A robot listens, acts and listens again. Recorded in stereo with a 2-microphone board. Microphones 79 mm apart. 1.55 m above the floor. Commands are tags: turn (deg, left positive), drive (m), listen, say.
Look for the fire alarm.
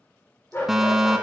<turn deg="-30"/>
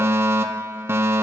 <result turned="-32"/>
<turn deg="-140"/>
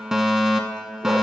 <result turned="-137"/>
<say>Found it: a fire alarm, straight ahead, under 1 m away.</say>